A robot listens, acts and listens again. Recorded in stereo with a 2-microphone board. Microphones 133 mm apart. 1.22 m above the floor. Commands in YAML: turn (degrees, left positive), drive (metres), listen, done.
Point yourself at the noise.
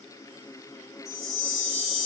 turn: -60
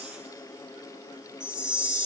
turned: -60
done: "Found it: a chime, straight ahead, 2 to 4 m away."